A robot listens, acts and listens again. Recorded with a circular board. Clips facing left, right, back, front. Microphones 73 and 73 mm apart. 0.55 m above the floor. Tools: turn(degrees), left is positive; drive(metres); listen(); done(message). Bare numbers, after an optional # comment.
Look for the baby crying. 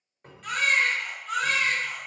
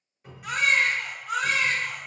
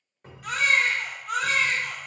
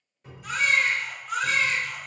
# The baby crying: 165° right.
turn(-165)
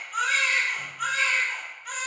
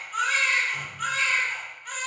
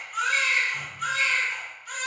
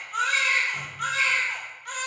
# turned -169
done("Facing the baby crying.")